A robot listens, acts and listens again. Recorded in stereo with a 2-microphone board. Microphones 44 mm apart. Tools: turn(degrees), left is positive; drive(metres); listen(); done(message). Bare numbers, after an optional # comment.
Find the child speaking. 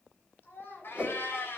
# The child speaking: about 50° left or 130° left.
turn(50)
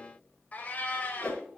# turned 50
listen()
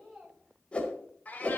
done("Facing the child speaking, over 4 m away.")